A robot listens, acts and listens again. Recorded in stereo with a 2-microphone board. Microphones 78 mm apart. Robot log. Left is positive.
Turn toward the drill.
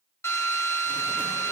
note: The drill: about 40° left or 140° left.
cmd yaw +40
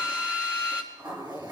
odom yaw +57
note: So it is at 15° right.
cmd yaw -15
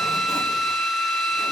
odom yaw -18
end: Found it: a drill, straight ahead.